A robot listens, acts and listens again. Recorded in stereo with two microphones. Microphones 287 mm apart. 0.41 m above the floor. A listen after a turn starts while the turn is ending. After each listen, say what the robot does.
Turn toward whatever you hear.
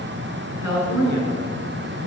Turn 70° right.
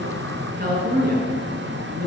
Turn 35° right.
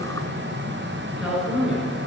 Facing the woman speaking, over 4 m away.